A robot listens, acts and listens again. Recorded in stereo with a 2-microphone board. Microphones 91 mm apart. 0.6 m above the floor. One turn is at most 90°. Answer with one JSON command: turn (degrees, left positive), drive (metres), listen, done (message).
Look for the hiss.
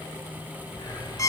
{"turn": 60}
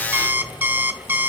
{"listen": true}
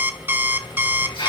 {"turn": 60}
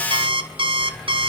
{"turn": 10}
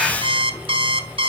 {"done": "Found it: a hiss, straight ahead, over 4 m away."}